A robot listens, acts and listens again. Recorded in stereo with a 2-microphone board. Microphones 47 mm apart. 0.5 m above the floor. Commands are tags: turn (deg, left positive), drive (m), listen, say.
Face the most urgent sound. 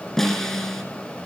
<listen/>
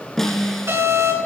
<turn deg="-70"/>
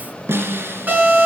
<turn deg="-40"/>
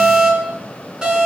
<turn deg="-15"/>
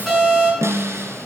<say>Facing the alarm, over 4 m away.</say>